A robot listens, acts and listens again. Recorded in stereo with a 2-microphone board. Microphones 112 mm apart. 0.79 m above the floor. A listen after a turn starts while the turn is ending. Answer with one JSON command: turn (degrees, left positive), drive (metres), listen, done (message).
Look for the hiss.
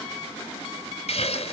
{"turn": 70}
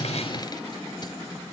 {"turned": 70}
{"listen": true}
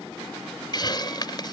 {"turn": 40}
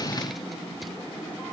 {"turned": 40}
{"listen": true}
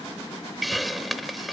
{"done": "Facing the hiss."}